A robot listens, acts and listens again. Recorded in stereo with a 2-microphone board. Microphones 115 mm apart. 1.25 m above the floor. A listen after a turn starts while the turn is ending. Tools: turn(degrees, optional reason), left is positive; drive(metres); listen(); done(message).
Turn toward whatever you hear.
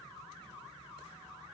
listen()
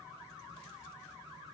listen()
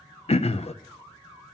turn(degrees=65, reason="The throat clearing: about 65° left or 115° left.")
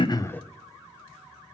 listen()
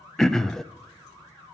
done("Found it: throat clearing, straight ahead.")